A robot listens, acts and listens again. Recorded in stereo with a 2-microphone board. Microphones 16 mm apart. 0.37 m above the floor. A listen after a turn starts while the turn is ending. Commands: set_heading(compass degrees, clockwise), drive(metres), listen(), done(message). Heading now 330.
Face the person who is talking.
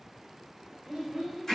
set_heading(25)
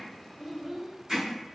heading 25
set_heading(70)
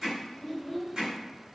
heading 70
done("Found it: a child speaking, straight ahead, under 1 m away.")